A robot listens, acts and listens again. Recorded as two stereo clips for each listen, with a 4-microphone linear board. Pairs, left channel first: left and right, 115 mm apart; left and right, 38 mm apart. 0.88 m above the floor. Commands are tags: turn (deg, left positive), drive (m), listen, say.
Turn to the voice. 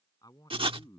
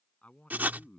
<turn deg="35"/>
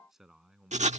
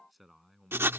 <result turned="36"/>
<say>Facing the man speaking.</say>